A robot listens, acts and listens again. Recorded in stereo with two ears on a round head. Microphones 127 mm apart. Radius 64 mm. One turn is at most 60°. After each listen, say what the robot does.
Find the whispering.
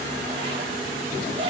Keep listening.
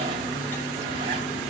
Keep listening.
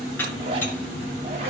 I can't make out whispering to turn to.